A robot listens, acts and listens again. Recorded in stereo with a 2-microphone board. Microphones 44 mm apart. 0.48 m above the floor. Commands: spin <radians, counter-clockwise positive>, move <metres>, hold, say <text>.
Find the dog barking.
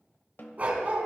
spin -0.61
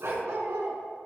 spin -1.75
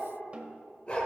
spin 0.44
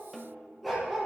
say Facing the dog barking, over 4 m away.